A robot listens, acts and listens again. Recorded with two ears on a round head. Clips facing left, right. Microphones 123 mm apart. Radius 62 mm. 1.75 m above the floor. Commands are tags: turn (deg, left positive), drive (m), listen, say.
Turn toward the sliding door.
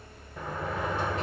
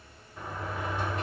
<turn deg="65"/>
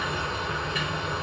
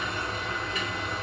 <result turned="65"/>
<turn deg="45"/>
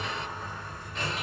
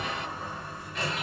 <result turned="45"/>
<turn deg="-10"/>
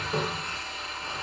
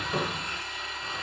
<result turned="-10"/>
<say>Found it: a sliding door, straight ahead.</say>